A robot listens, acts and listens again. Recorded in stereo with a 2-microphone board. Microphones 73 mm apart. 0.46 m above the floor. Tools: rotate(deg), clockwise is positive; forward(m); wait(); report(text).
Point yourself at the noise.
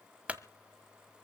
rotate(15)
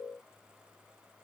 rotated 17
wait()
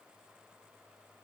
report("I heard a clunk, but can't make it out now. It was about straight ahead or 145° right.")